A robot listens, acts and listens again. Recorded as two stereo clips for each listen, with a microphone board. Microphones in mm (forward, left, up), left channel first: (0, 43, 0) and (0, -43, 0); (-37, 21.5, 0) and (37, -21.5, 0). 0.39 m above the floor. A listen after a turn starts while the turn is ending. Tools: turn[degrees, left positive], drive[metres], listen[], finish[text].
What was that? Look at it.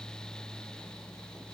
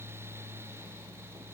Action: listen[]
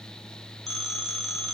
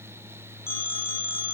Action: finish[Found it: a phone ringing, straight ahead, 2 to 4 m away.]